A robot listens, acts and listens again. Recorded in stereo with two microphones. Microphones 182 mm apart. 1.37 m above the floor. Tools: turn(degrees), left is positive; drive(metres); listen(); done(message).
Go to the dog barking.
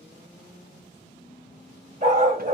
turn(degrees=-40)
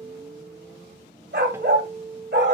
turn(degrees=-100)
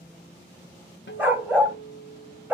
turn(degrees=-10)
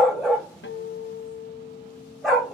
drive(metres=1.0)
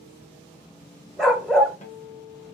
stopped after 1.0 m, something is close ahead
done("Arrived at the dog barking, straight ahead.")